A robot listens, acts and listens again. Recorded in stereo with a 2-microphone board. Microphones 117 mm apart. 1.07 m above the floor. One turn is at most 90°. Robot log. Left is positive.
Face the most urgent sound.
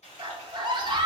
note: The scream: about 40° right or 140° right.
cmd yaw -40
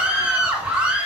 note: So it is at 10° right.
cmd yaw -10
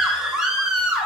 end: Found it: a scream, straight ahead.